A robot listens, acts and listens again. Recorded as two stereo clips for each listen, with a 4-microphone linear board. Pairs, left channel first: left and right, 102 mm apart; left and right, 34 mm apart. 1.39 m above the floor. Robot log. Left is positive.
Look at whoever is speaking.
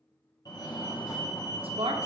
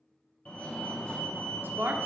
note: The woman speaking: about 65° right or 115° right.
cmd yaw -65
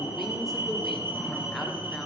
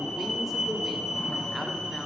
cmd idle
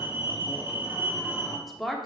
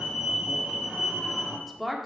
end: Facing the woman speaking, under 1 m away.